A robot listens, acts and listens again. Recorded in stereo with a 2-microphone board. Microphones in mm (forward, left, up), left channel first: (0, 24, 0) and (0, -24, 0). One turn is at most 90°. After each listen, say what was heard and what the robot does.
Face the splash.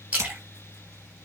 The splash: about 30° right or 150° right. Turn 30° right.
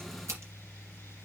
Keep listening.
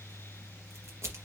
I heard a splash, but can't make it out now. It was about straight ahead or 120° right.